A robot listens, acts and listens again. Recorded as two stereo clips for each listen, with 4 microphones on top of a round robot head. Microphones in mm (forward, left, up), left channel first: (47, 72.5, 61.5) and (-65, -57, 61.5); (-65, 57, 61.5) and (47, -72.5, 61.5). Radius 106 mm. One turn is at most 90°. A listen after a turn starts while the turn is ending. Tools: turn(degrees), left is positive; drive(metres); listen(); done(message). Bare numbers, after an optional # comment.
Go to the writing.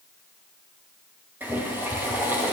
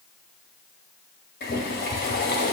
listen()
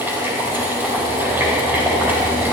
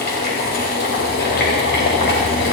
listen()
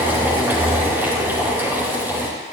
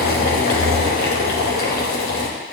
done("I can't make out writing to turn to.")